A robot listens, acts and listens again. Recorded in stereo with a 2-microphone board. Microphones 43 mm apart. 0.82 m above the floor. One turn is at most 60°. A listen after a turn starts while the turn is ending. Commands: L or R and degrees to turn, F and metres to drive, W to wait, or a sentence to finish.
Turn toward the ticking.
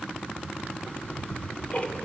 L30
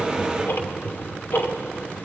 L60
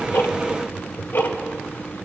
L60
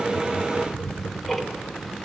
Facing the ticking, 2 to 4 m away.